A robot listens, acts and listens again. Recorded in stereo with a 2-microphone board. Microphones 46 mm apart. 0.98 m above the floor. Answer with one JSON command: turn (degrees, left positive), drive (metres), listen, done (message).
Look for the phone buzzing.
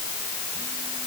{"listen": true}
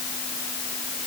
{"listen": true}
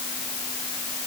{"done": "I can't make out a phone buzzing."}